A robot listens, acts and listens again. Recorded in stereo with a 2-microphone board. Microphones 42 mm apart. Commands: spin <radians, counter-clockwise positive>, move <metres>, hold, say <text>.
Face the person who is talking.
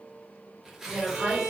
spin -1.05
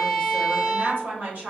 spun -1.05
spin -1.05
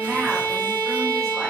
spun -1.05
hold
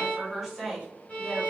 say Found it: a woman speaking, straight ahead, 1 to 2 m away.